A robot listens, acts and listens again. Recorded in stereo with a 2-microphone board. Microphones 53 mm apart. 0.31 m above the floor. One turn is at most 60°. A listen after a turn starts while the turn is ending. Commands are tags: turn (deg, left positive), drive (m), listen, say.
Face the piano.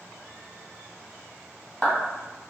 <listen/>
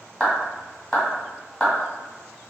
<listen/>
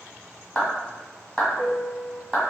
<turn deg="30"/>
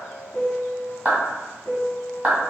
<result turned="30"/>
<turn deg="60"/>
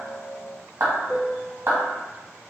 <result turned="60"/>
<turn deg="60"/>
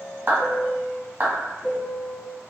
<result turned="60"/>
<turn deg="25"/>
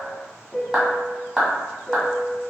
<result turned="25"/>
<say>Facing the piano, under 1 m away.</say>